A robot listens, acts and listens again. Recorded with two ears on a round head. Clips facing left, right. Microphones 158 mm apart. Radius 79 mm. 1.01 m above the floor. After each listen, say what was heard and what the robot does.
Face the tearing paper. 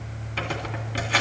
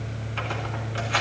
The tearing paper: about 45° left or 135° left. Turn 45° left.
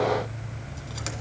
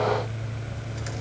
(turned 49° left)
Keep listening.
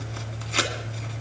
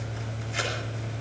So it is at 85° left. Turn 85° left.
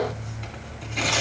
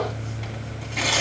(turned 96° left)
The tearing paper is now 10° right. Turn 10° right.
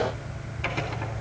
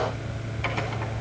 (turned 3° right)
Keep listening.
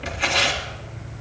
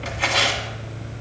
Facing the tearing paper, 1 to 2 m away.